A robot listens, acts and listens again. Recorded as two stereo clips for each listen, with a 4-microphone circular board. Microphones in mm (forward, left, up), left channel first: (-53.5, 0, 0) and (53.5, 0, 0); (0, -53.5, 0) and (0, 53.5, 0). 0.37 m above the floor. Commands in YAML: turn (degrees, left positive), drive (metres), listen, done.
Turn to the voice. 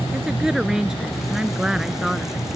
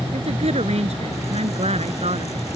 turn: 85
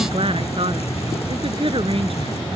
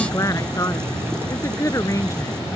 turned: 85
turn: -30
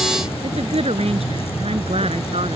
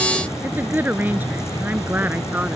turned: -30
turn: 15
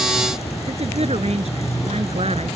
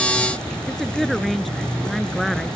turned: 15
done: "Facing the woman speaking."